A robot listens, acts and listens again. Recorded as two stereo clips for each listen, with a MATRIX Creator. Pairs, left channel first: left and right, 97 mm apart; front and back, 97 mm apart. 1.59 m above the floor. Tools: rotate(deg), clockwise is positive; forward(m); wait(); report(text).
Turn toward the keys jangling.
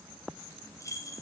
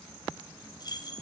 rotate(-40)
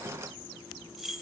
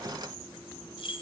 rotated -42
report("Facing the keys jangling.")